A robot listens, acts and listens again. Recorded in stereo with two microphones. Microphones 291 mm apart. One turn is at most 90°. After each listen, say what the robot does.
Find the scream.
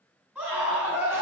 Turn 30° right.
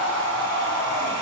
Turn 20° left.
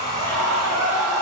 Turn 10° left.
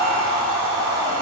Found it: a scream, straight ahead.